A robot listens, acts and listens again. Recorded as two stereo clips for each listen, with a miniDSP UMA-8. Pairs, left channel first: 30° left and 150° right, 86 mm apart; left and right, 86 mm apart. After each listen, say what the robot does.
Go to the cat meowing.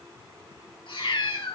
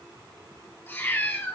Turn 25° left.
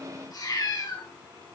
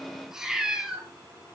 Turn 10° right.
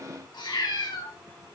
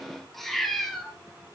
Drive 1.0 m forward.
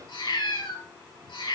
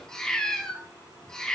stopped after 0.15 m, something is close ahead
Turn 10° left.
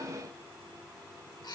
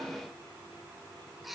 Something is in my way. I am facing the cat meowing but have not reached it.